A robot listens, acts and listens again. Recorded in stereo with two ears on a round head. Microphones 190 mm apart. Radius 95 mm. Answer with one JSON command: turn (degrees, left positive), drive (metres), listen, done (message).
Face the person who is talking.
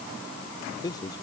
{"turn": 20}
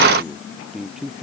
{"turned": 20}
{"done": "Facing the man speaking."}